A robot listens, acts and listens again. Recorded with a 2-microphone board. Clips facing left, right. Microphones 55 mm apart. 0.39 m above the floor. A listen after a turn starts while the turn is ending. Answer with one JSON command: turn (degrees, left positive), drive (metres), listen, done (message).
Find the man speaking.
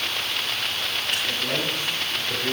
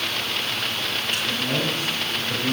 {"turn": 30}
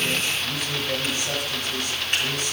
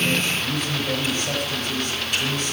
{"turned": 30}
{"done": "Found it: a man speaking, straight ahead."}